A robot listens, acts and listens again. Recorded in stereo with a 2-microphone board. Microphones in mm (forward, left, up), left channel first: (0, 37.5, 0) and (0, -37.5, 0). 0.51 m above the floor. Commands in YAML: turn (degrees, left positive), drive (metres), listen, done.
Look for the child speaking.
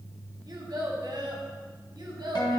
turn: -90
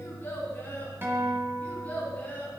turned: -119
turn: 20
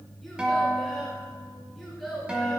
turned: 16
done: "Found it: a child speaking, straight ahead."